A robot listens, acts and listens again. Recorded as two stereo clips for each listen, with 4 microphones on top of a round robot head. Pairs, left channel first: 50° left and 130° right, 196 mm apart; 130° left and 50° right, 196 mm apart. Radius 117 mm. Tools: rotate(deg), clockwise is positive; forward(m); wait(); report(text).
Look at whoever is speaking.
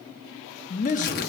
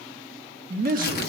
report("Found it: a man speaking, straight ahead, 1 to 2 m away.")